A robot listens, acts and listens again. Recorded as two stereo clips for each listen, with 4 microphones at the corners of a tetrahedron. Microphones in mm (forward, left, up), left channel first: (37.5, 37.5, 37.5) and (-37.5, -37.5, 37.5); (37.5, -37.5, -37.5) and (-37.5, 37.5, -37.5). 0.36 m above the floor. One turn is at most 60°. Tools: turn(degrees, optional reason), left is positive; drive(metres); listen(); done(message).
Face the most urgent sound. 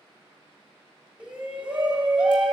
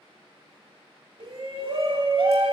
turn(degrees=60, reason="The shout: 150° left.")
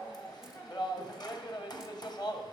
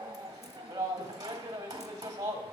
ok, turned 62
turn(degrees=60, reason="The shout is now 85° left.")
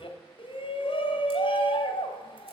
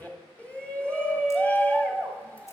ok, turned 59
turn(degrees=30, reason="The shout is now 30° left.")
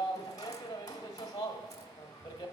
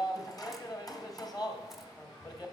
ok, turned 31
done("Facing the shout.")